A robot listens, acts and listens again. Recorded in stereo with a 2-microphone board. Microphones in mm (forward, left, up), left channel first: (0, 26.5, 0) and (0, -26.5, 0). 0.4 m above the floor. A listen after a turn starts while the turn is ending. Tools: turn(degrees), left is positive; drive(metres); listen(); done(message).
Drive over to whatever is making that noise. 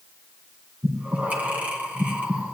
turn(degrees=-30)
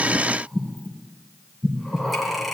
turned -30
drive(metres=1.0)
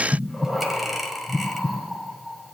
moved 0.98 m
drive(metres=1.0)
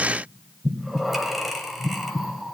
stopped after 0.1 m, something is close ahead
done("Arrived at the breathing, straight ahead.")